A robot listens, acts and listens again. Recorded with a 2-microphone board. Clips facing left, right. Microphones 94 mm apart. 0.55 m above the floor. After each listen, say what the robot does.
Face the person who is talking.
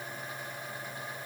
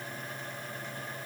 Keep listening.
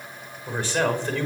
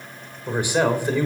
Turn 30° right.
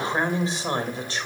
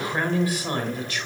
Turn 30° left.
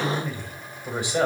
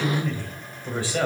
Turn 20° left.
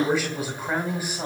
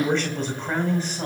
Turn 10° left.
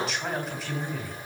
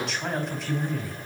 Found it: a man speaking, straight ahead.